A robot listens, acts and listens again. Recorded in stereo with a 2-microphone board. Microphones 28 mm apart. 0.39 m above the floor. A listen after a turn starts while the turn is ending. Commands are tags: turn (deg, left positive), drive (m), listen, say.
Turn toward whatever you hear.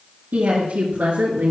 <turn deg="-90"/>
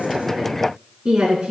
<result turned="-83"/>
<turn deg="-20"/>
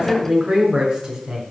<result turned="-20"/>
<turn deg="-10"/>
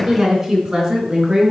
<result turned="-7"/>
<turn deg="-15"/>
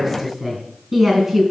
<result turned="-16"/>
<say>Found it: a woman speaking, straight ahead.</say>